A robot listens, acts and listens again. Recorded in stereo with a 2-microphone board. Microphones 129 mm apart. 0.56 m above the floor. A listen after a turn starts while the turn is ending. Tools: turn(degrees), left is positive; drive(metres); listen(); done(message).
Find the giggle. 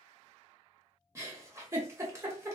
turn(degrees=-20)
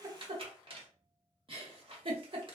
turn(degrees=-140)
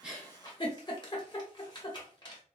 turn(degrees=35)
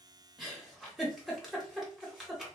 done("Found it: a giggle, straight ahead, under 1 m away.")